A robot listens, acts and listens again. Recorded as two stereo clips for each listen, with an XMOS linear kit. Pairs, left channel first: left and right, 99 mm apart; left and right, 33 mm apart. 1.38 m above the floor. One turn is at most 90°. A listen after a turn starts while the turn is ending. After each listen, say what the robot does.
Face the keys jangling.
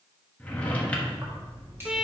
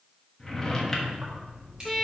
Turn 25° right.
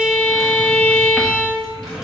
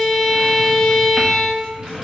Keep listening.
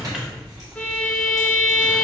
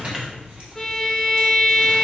Turn 35° right.
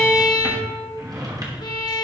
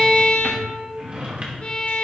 Keep listening.
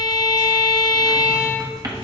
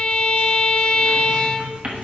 Keep listening.
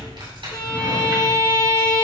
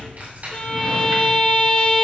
Turn 90° right.
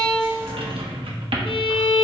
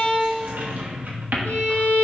Turn 25° right.
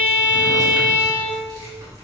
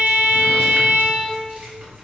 Turn 40° right.
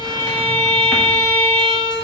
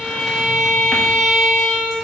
Keep listening.
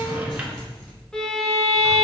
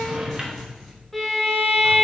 Facing the keys jangling, 2 to 4 m away.